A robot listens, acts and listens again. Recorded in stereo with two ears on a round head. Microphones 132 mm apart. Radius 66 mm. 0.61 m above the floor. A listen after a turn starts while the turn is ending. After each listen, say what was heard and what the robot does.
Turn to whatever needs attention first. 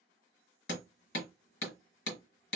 Keep listening.
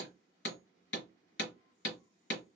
Keep listening.
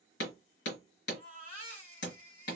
The baby crying: about 40° left or 140° left. Turn 40° left.
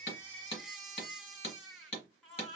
Found it: a baby crying, straight ahead.